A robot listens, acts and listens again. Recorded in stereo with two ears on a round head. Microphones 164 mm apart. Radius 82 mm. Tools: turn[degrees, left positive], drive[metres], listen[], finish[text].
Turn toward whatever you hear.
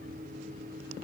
Action: listen[]
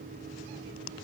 Action: listen[]
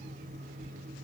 Action: finish[I can't make out anything to turn to.]